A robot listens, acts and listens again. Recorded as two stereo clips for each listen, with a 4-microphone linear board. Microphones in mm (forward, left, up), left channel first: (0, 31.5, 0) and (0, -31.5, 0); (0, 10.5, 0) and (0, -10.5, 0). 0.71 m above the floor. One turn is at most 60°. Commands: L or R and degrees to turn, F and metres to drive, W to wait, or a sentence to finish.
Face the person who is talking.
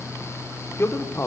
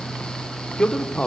L45
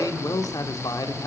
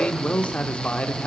L60
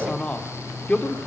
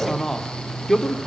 L25
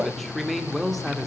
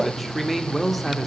Facing the man speaking, 1 to 2 m away.